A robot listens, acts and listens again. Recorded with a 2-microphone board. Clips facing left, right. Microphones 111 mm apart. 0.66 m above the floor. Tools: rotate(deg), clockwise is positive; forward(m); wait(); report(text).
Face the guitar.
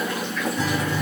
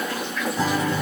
rotate(30)
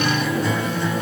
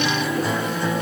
report("Found it: a guitar, straight ahead.")